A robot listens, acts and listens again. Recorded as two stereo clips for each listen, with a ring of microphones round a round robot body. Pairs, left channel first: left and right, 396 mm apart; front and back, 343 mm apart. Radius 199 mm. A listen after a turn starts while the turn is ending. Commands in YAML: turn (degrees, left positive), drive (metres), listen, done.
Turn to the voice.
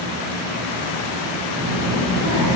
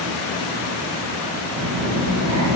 turn: -140
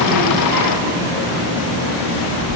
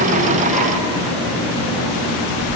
turn: -20
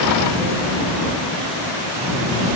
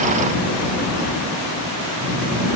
done: "Facing the child speaking."